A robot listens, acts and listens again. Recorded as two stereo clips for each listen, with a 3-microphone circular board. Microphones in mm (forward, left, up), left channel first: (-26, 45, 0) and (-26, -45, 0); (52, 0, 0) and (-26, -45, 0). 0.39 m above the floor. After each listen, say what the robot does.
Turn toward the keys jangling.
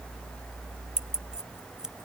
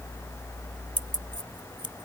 Turn 170° right.
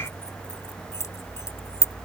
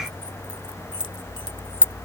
Turn 40° left.
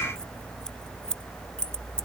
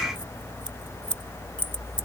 Turn 10° left.
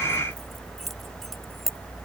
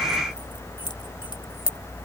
Found it: keys jangling, straight ahead.